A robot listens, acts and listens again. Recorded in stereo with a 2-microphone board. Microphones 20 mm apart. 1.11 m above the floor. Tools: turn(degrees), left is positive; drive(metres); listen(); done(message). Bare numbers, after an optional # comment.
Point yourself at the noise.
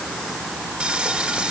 turn(-90)
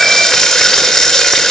# So it is at 15° left.
turn(15)
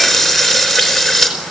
done("Found it: frying, straight ahead.")